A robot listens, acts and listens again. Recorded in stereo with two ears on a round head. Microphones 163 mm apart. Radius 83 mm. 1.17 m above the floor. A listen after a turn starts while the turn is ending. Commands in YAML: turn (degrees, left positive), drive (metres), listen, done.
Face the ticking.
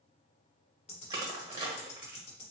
turn: 35
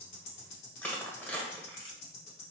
turn: 110
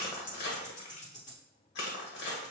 turn: 40
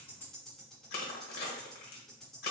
done: "Facing the ticking."